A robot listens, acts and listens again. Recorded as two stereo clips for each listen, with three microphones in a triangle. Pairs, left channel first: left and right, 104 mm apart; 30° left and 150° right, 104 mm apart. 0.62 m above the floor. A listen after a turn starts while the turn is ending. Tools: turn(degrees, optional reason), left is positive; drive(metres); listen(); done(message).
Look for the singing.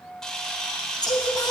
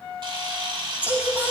turn(degrees=140, reason="The singing: 140° left.")
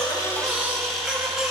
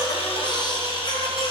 done("Found it: singing, straight ahead, 2 to 4 m away.")